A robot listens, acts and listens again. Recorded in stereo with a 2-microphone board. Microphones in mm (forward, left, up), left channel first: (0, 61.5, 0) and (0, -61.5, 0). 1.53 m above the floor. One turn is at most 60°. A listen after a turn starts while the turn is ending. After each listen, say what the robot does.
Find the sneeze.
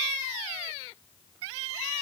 Keep listening.
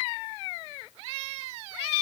Keep listening.
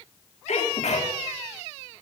Turn 60° left.
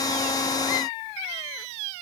Keep listening.
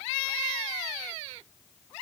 I heard a sneeze, but can't make it out now. It was about 5° left or 55° left.